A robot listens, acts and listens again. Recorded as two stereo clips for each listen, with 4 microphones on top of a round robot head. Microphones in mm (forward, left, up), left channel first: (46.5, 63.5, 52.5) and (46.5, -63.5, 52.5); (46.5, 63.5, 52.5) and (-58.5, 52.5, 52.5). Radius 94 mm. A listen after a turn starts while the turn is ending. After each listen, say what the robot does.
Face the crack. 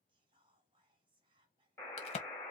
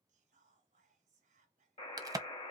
Turn 130° left.
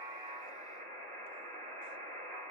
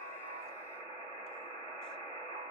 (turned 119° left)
Turn 10° left.
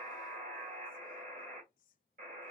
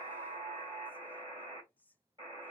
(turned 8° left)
Facing where the crack came from. I can't hear it now.